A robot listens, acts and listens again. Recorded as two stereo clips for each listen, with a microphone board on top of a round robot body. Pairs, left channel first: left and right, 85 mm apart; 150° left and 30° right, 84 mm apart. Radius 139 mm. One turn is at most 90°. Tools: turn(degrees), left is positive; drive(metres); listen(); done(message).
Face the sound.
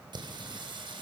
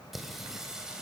turn(degrees=-90)
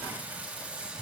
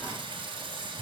turn(degrees=-15)
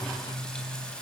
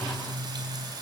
turn(degrees=10)
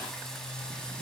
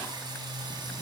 turn(degrees=10)
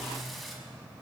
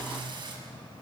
done("Facing the singing.")